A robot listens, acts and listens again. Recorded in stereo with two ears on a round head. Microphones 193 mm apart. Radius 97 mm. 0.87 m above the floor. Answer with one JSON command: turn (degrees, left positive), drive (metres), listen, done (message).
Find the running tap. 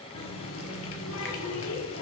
{"turn": 65}
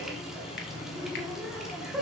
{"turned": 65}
{"done": "Facing the running tap, 1 to 2 m away."}